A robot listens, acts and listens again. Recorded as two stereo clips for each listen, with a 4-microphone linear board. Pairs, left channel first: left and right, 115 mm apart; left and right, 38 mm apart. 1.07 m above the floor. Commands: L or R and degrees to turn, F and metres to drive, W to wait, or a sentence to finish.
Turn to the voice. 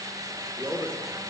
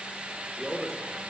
L30
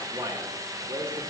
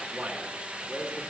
R25
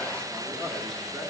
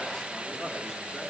Facing the man speaking, 1 to 2 m away.